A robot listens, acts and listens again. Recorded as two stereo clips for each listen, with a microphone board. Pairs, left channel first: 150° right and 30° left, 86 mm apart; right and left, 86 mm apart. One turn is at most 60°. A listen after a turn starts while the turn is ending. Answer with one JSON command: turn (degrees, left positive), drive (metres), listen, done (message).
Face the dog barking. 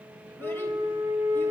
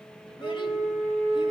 {"listen": true}
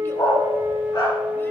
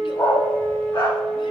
{"turn": -60}
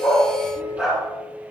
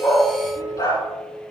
{"turn": -60}
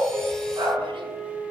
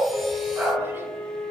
{"turn": 20}
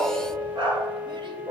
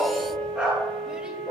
{"turn": 15}
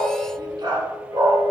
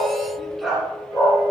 {"done": "Facing the dog barking."}